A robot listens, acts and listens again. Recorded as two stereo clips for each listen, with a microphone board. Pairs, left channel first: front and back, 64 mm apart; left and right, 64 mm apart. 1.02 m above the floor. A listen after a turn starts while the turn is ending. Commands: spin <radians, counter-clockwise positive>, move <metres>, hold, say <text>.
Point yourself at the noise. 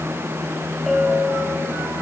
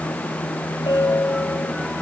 spin 1.57
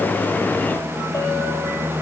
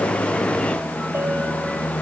hold
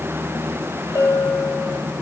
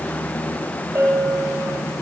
spin -0.70
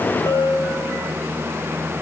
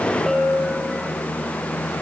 say Found it: a bell, straight ahead.